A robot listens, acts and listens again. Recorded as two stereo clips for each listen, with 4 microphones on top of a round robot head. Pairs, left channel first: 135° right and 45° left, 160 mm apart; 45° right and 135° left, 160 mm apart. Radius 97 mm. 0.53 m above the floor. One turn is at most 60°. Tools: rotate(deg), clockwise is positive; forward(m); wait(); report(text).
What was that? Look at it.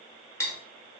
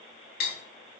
rotate(60)
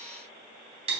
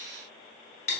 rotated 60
report("Facing the cutlery clinking.")